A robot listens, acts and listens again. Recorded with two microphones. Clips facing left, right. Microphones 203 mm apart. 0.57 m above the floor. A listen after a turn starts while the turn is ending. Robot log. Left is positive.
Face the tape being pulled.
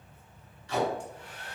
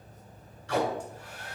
note: The tape being pulled: about 70° right or 110° right.
cmd yaw -70
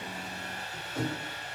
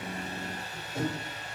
note: So it is at 20° right.
cmd yaw -20
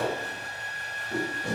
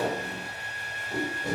end: Facing the tape being pulled, 2 to 4 m away.